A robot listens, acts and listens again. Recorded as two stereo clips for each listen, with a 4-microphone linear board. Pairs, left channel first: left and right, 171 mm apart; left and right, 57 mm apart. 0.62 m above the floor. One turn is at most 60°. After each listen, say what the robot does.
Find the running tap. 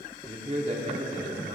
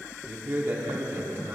Keep listening.
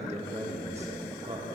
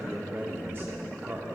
Keep listening.
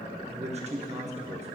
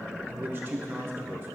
I can't make out a running tap to turn to.